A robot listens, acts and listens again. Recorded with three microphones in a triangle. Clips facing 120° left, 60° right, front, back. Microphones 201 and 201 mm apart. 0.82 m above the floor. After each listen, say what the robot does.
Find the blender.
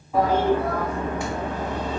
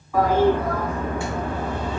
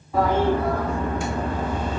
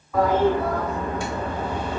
Keep listening.
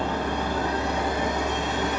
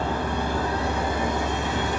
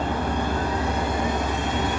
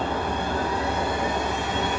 Keep listening.
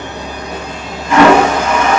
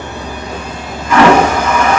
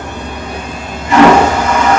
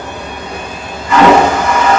I can't make out a blender to turn to.